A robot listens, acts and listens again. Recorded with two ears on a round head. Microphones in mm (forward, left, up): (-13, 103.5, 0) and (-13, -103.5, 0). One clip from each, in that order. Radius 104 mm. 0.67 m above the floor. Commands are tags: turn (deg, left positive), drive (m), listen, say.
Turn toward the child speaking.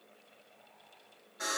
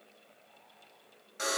<listen/>
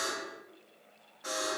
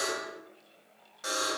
<listen/>
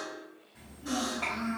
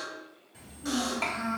<turn deg="-75"/>
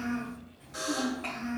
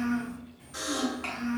<turn deg="-20"/>
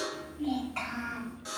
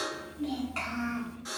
<say>Found it: a child speaking, straight ahead.</say>